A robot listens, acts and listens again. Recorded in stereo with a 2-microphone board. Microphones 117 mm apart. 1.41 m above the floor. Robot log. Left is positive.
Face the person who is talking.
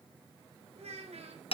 note: The child speaking: about 70° right or 110° right.
cmd yaw -70
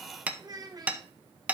note: So it is at 35° right.
cmd yaw -35
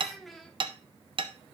end: Found it: a child speaking, straight ahead, under 1 m away.